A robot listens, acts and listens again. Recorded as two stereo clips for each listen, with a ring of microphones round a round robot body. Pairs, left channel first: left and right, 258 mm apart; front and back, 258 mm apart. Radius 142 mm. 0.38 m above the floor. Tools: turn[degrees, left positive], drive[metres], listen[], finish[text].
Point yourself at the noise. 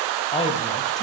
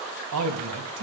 Thought: The man speaking: 155° left.
Action: turn[155]
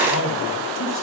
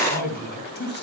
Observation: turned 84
Thought: The man speaking is now 50° left.
Action: turn[50]
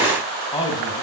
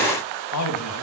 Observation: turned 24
Thought: The man speaking is now 20° left.
Action: turn[20]
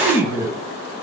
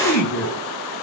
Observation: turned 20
Thought: The man speaking is now 10° right.
Action: turn[-10]
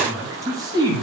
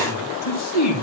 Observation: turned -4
Thought: The man speaking is now 15° right.
Action: turn[-15]
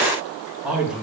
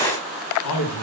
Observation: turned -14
Action: finish[Facing the man speaking.]